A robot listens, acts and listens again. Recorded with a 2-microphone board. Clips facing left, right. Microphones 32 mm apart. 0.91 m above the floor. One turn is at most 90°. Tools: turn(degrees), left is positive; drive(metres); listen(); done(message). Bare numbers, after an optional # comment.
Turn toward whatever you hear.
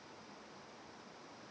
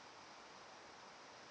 listen()
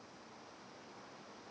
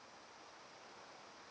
listen()
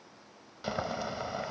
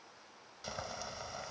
# The boiling: about 30° left or 150° left.
turn(30)
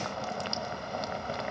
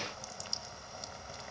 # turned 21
# So it is at 125° left.
turn(90)
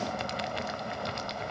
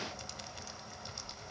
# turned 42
# The boiling is now 80° left.
turn(80)
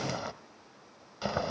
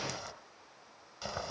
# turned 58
# The boiling is now 25° left.
turn(25)
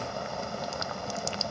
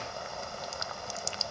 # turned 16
done("Facing the boiling, 1 to 2 m away.")